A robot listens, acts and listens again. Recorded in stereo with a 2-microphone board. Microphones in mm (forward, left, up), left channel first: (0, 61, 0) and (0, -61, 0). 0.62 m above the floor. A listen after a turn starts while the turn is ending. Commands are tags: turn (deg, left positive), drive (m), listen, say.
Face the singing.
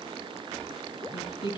<turn deg="45"/>
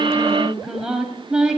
<turn deg="-10"/>
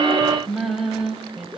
<say>Found it: singing, straight ahead.</say>